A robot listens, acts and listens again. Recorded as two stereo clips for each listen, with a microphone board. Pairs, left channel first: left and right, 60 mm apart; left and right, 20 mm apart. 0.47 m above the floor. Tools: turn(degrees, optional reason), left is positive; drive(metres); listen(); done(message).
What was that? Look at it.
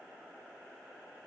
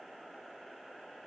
listen()
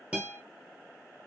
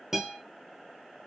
turn(degrees=-20, reason="The guitar: about 20° right or 160° right.")
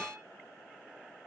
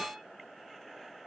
listen()
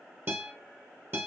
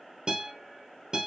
turn(degrees=-140, reason="So it is at 140° right.")
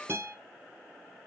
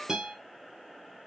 turn(degrees=-40, reason="The guitar is now 40° right.")
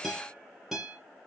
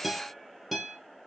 done("Facing the guitar.")